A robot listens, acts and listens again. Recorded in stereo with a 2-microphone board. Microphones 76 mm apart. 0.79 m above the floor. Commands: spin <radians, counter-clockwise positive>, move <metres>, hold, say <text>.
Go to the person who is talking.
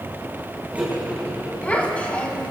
spin 0.35
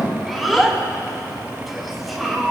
move 1.0
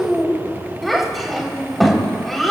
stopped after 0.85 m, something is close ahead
say Something is in my way. I am facing the child speaking but have not reached it.